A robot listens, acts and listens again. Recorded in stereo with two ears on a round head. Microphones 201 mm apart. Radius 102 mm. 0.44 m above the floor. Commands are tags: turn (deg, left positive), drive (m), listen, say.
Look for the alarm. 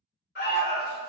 <turn deg="45"/>
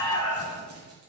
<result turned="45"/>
<turn deg="80"/>
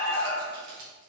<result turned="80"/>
<turn deg="20"/>
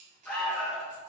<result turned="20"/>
<say>Facing the alarm.</say>